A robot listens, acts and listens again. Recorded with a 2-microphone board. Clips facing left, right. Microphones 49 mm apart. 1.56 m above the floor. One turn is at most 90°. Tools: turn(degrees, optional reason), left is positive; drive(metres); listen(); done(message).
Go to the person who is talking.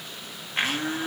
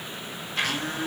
listen()
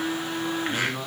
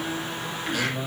turn(degrees=60, reason="The man speaking: about 60° left or 120° left.")
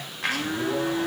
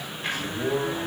drive(metres=1.0)
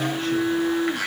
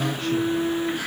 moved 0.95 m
listen()
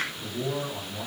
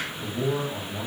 drive(metres=1.0)
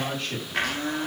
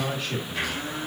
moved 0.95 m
drive(metres=1.0)
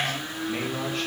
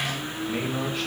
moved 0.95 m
drive(metres=1.0)
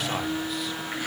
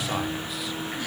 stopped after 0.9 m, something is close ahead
listen()
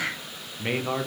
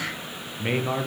done("Arrived at the man speaking, straight ahead.")